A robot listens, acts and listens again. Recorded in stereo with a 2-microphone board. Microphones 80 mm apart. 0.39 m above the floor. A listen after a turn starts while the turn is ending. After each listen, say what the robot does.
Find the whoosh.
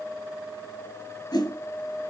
Turn 60° left.
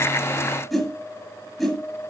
Facing the whoosh, 2 to 4 m away.